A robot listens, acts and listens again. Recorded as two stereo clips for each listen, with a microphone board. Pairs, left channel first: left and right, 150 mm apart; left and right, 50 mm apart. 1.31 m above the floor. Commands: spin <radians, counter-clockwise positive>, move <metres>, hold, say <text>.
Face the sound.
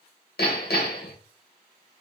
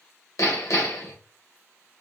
spin 1.57
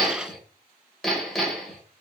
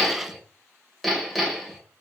say Found it: hammering, straight ahead, 1 to 2 m away.